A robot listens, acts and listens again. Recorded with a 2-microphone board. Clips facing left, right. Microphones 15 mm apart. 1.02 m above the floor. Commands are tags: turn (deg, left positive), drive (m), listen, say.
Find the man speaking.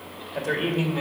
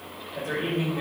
<turn deg="35"/>
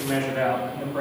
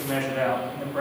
<turn deg="-20"/>
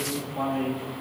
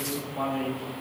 <turn deg="-15"/>
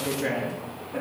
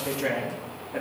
<turn deg="-15"/>
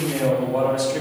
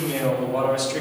<turn deg="-15"/>
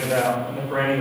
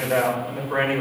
<say>Found it: a man speaking, straight ahead.</say>